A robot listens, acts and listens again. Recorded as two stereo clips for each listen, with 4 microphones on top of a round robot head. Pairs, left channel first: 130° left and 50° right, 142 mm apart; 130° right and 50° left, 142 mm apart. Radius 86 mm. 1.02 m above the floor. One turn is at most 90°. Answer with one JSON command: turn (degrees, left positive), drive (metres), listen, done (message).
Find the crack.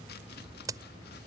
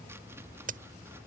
{"turn": 20}
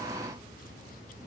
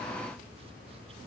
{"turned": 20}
{"done": "I heard a crack from this way, but can't make it out now."}